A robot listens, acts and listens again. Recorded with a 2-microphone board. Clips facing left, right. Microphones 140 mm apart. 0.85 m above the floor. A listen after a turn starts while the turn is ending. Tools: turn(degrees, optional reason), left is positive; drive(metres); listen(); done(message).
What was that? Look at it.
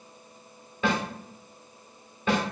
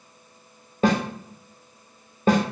turn(degrees=-40, reason="The snare drum: about 40° right or 140° right.")
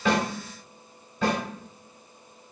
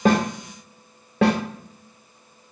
turn(degrees=-100, reason="So it is at 100° right.")
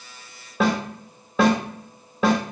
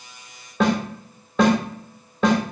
done("Found it: a snare drum, straight ahead.")